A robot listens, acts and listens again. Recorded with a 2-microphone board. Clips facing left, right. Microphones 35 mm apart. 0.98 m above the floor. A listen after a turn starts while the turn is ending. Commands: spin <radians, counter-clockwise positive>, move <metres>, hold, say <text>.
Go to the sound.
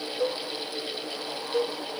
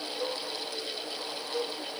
spin 0.52
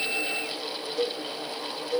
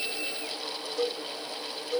move 1.0
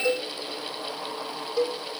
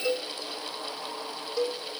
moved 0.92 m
move 1.0
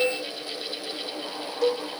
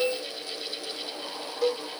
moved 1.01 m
spin -0.17
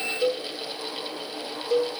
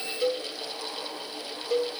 move 1.0
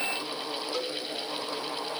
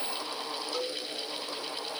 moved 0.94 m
move 1.0
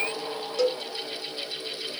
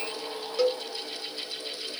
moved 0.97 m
spin -0.26
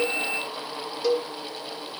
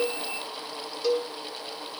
move 1.0
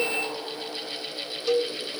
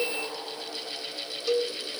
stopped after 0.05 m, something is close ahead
say I am next to the cowbell.